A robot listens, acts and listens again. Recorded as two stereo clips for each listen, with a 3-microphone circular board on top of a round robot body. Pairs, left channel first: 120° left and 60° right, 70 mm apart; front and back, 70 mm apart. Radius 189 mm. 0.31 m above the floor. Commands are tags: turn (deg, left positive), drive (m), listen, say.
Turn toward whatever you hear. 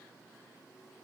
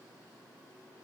<listen/>
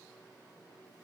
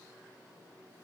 <listen/>
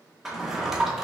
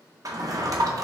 <turn deg="-145"/>
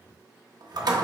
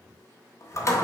<turn deg="-45"/>
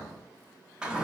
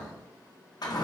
<turn deg="15"/>
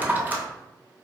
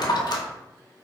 <say>Found it: a drawer, straight ahead.</say>